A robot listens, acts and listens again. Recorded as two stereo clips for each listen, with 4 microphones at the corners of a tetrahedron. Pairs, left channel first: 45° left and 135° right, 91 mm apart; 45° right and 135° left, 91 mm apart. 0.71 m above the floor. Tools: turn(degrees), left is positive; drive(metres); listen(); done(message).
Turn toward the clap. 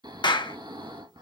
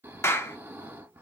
turn(degrees=15)
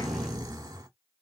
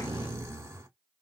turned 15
listen()
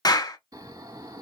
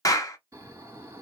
done("Found it: a clap, straight ahead, under 1 m away.")